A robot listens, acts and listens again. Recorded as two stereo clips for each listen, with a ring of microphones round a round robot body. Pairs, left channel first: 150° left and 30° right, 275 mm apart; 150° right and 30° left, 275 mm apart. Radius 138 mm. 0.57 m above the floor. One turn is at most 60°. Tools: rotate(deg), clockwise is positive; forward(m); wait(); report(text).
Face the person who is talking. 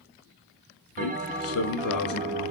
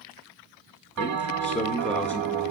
rotate(-60)
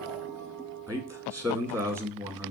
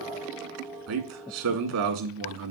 rotate(-50)
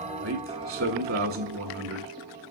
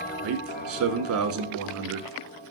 report("Facing the man speaking, 1 to 2 m away.")